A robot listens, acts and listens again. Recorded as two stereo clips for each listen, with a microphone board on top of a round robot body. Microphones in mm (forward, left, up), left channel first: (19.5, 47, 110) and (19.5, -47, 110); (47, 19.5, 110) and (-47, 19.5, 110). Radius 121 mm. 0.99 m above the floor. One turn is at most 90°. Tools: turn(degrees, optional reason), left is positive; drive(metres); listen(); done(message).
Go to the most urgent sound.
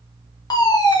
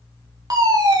turn(degrees=90, reason="The fire alarm: 135° left.")
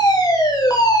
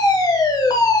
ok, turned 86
turn(degrees=45, reason="The fire alarm is now 45° left.")
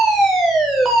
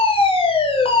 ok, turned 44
drive(metres=1.0)
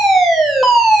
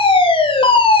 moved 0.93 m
drive(metres=1.0)
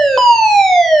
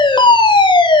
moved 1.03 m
drive(metres=1.0)
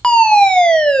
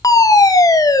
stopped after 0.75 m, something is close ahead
turn(degrees=15, reason="The fire alarm is now 15° left.")
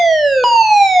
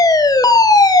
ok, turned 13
done("I am next to the fire alarm.")